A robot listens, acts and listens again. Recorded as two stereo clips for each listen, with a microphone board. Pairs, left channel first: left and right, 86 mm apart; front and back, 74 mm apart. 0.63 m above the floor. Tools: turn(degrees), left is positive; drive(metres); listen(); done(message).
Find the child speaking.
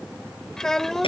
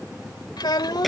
done("Found it: a child speaking, straight ahead.")